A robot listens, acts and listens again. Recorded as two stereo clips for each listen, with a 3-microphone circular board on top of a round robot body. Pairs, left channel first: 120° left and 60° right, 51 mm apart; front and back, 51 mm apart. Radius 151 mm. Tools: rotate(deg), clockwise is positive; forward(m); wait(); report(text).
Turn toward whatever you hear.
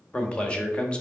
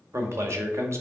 rotate(175)
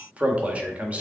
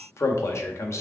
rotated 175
report("Facing the man speaking.")